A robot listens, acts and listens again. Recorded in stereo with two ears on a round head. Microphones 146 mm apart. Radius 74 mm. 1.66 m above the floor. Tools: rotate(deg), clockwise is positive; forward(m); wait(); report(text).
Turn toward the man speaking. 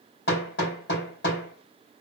wait()
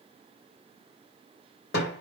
wait()
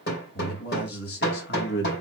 rotate(-70)
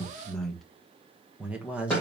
report("Found it: a man speaking, straight ahead.")